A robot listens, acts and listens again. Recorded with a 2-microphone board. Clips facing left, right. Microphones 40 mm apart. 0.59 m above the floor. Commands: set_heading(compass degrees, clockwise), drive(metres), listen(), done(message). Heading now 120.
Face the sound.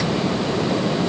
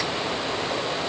listen()
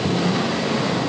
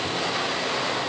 listen()
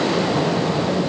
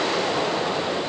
done("I can't make out anything.")